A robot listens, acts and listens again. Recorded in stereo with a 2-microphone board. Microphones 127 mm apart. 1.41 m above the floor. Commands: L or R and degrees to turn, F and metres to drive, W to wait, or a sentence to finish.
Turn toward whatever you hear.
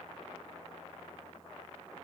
W
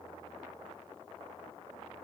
W
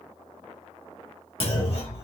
L50
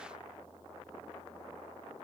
W
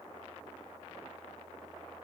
I heard a clunk, but can't make it out now. It was about straight ahead or 80° left.